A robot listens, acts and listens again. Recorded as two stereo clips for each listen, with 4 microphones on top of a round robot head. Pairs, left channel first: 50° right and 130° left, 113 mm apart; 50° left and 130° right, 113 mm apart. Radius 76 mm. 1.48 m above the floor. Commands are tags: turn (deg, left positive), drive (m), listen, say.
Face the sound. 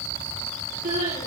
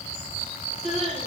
<turn deg="140"/>
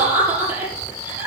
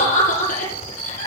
<turn deg="55"/>
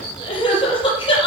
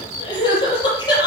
<say>Facing the crying.</say>